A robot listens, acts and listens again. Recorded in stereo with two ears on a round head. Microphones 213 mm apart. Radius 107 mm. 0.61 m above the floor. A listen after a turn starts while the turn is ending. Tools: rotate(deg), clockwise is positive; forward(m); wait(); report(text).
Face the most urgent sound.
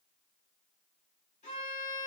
wait()
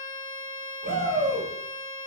rotate(40)
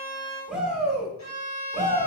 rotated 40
report("Facing the shout.")